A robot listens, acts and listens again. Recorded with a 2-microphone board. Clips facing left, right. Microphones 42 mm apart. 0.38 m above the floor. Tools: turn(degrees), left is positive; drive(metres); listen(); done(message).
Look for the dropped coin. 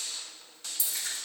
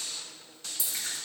turn(degrees=-45)
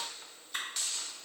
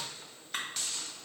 listen()
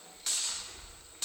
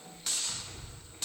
done("I heard a dropped coin, but can't make it out now. It was about straight ahead or 90° right.")